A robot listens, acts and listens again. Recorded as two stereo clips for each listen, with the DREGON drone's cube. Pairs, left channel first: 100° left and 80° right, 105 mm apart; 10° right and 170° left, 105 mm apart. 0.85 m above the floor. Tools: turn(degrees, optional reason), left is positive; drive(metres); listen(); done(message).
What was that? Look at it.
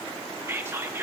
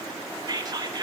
turn(degrees=-145, reason="The whispering: 145° right.")
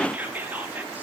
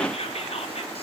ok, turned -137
done("Found it: whispering, straight ahead, 1 to 2 m away.")